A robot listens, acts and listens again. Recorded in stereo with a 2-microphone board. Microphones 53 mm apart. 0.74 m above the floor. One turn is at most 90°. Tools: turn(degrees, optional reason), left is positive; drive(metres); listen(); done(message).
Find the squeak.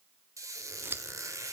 turn(degrees=-90)
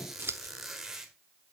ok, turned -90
done("Found it: a squeak, straight ahead, 1 to 2 m away.")